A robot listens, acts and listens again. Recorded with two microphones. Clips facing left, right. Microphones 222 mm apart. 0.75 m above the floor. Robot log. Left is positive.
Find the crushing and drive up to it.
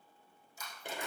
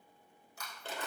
note: The crushing: about 65° right or 115° right.
cmd yaw -65
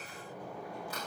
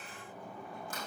cmd idle
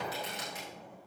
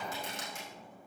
cmd idle
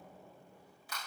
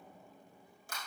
note: So it is at 50° right.
cmd yaw -50
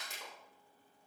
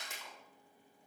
cmd fwd 1.0
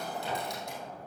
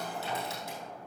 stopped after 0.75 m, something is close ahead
cmd idle
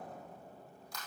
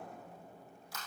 end: Something is in my way. I am facing the crushing but have not reached it.